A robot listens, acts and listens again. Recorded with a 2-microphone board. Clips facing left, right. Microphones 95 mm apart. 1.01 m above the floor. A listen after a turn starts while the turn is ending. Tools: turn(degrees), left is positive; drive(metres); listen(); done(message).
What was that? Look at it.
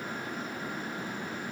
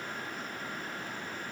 listen()
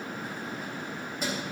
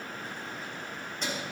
turn(degrees=30)
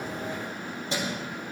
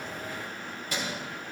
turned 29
turn(degrees=155)
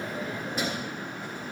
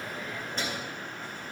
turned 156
turn(degrees=10)
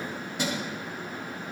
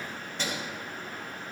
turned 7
turn(degrees=15)
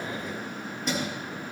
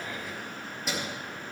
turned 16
done("Found it: keys jangling, straight ahead, 2 to 4 m away.")